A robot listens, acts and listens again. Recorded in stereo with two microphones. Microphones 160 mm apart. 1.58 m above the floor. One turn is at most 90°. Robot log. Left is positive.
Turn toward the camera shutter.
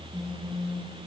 cmd idle
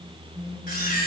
note: The camera shutter: about 65° left or 115° left.
cmd yaw +65
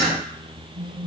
cmd idle
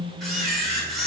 end: Facing the camera shutter.